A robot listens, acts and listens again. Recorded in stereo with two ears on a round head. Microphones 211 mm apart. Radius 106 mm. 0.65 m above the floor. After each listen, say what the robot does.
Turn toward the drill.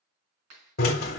Turn 40° left.
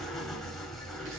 Found it: a drill, straight ahead.